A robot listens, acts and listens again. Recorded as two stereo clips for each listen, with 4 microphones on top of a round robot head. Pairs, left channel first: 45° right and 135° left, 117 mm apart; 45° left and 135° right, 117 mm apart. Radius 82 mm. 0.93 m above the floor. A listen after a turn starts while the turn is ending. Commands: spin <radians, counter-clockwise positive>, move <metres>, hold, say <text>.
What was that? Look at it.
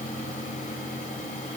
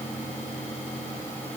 hold
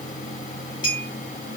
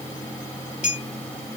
spin 0.17
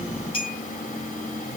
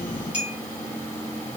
say Facing the clink.